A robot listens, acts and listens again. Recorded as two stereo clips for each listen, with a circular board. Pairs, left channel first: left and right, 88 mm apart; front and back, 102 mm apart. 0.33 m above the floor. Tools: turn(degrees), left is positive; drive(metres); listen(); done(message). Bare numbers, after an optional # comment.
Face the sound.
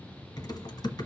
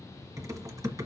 # The typing on a keyboard: 125° left.
turn(125)
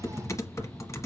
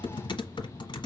# The typing on a keyboard is now 40° left.
turn(40)
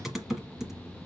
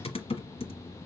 done("Found it: typing on a keyboard, straight ahead.")